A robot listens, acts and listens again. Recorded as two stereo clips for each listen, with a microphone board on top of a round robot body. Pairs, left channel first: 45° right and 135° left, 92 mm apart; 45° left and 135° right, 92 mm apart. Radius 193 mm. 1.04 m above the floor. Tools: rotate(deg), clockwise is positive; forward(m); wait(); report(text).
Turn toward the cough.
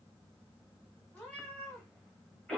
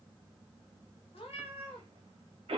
rotate(125)
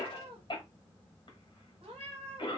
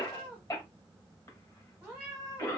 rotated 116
report("Facing the cough.")